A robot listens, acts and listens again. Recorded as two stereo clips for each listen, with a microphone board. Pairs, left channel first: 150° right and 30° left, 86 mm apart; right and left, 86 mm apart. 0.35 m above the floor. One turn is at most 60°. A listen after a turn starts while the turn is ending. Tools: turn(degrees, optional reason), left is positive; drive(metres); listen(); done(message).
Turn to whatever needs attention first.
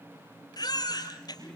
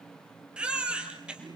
turn(degrees=60, reason="The baby crying: 170° left.")
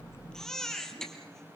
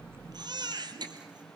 turn(degrees=60, reason="The baby crying is now 125° left.")
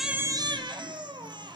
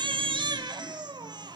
turn(degrees=60, reason="The baby crying is now 60° left.")
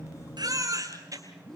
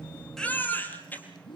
turn(degrees=-20, reason="The baby crying is now 20° right.")
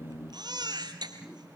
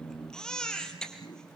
done("Facing the baby crying.")